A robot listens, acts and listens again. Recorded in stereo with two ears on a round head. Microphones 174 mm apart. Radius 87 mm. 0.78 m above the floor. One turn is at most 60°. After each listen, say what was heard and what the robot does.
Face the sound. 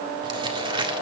The crumpling: about 25° right or 155° right. Turn 25° right.
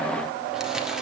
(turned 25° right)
Keep listening.
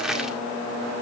Facing the crumpling, 1 to 2 m away.